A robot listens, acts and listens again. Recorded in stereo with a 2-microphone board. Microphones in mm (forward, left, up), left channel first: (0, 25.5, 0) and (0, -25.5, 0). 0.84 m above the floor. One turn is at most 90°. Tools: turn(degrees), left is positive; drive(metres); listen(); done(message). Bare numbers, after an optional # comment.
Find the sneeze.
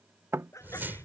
turn(90)
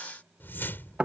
done("I heard a sneeze from this way, but can't make it out now.")